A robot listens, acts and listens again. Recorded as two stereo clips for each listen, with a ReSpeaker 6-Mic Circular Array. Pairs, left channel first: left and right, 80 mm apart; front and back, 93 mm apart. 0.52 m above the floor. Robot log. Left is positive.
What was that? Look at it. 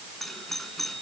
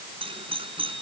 note: The doorbell: straight behind.
cmd yaw +180
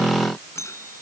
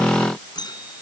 note: The doorbell is now 40° left.
cmd yaw +40
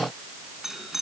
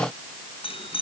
end: Facing the doorbell.